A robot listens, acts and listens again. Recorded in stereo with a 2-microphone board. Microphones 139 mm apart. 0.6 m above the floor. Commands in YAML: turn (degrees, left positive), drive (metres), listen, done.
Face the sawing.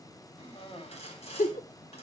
turn: 50
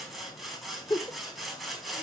done: "Facing the sawing, over 4 m away."